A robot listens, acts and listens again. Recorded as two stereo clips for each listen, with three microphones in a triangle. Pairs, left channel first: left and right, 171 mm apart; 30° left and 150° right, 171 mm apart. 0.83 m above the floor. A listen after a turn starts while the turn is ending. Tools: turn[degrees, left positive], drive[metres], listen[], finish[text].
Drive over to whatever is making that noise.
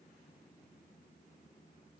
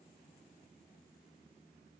Action: listen[]
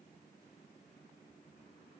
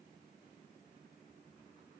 Action: listen[]
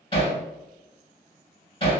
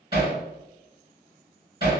Thought: The hammering: 150° left.
Action: turn[150]
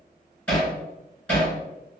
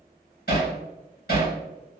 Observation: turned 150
Thought: The hammering is now 10° left.
Action: turn[10]
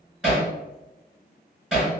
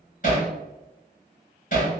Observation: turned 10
Action: drive[1.0]
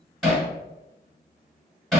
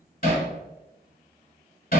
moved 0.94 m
Action: drive[1.0]
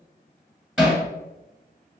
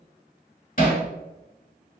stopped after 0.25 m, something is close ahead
Action: finish[I am next to the hammering.]